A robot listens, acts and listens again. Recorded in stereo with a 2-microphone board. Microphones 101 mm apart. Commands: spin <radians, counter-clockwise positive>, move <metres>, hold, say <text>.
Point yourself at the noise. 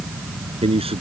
spin -1.57
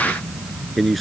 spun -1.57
say Found it: a man speaking, straight ahead.